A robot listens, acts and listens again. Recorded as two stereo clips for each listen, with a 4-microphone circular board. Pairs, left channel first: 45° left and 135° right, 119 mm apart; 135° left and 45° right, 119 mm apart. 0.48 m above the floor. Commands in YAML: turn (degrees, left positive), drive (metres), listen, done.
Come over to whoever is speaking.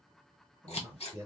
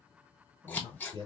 turn: -80
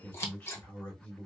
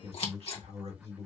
turn: -30
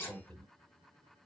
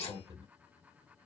turn: -25
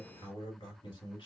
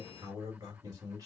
drive: 1.0
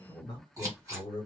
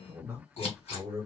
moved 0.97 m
turn: 15
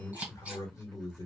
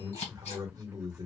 drive: 1.0
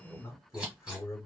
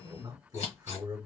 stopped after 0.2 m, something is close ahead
turn: -10
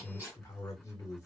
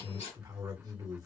done: "I am next to the man speaking."